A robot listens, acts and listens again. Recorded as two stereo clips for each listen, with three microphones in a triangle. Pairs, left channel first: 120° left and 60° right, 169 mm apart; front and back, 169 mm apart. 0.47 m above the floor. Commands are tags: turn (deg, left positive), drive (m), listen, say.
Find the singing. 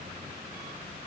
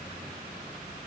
<listen/>
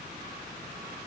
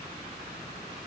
<listen/>
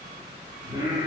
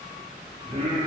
<turn deg="-135"/>
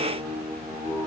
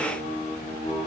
<turn deg="-20"/>
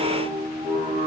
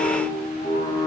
<say>Found it: singing, straight ahead, 2 to 4 m away.</say>